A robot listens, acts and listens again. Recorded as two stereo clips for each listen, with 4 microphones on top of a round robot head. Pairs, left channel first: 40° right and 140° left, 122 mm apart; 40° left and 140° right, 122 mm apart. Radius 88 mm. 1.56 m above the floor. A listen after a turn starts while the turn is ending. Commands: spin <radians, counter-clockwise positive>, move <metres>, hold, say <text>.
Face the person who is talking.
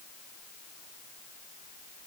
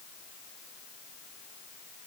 hold
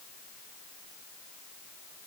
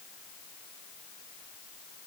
hold
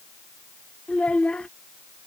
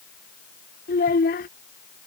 spin 0.70
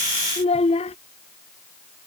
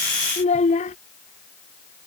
say Facing the child speaking.